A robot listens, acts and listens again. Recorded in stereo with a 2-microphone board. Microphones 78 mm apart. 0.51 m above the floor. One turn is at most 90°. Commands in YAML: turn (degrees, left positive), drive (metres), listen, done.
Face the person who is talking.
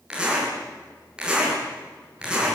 listen: true
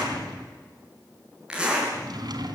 listen: true
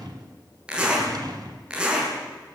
done: "I can't make out anyone speaking to turn to."